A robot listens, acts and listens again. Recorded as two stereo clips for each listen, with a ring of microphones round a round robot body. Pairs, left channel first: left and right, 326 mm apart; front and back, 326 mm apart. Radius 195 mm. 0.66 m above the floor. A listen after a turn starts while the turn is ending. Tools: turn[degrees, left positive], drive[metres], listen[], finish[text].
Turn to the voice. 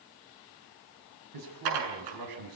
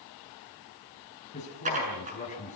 Thought: The man speaking: 70° right.
Action: turn[-70]
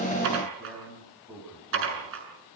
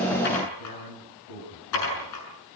Action: finish[Found it: a man speaking, straight ahead, over 4 m away.]